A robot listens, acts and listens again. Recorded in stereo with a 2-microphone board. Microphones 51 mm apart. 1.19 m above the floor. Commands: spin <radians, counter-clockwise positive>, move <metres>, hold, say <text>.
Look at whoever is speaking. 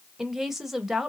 spin -0.52
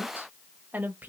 spin -2.53
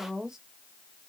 spin -0.17
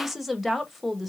say Facing the woman speaking.